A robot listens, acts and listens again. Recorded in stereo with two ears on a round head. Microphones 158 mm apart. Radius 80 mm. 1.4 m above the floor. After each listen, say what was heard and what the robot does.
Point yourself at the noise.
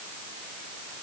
Keep listening.
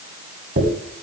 The dropped coin: about 45° right or 135° right. Turn 45° right.
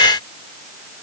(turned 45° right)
Keep listening.
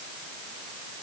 I heard a dropped coin, but can't make it out now. It was about straight ahead or 90° right.